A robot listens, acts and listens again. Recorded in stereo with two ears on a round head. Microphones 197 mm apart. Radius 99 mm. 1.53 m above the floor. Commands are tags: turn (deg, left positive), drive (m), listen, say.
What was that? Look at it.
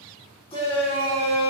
<turn deg="25"/>
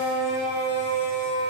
<turn deg="130"/>
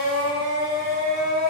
<turn deg="30"/>
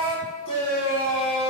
<turn deg="25"/>
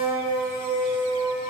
<turn deg="-10"/>
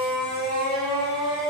<say>Found it: a shout, straight ahead.</say>